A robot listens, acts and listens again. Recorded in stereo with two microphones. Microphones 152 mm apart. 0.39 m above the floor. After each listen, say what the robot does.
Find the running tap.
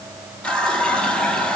Turn 30° left.
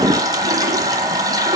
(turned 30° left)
Turn 25° right.
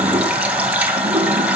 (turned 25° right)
Turn 10° right.
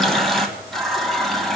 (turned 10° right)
Facing the running tap.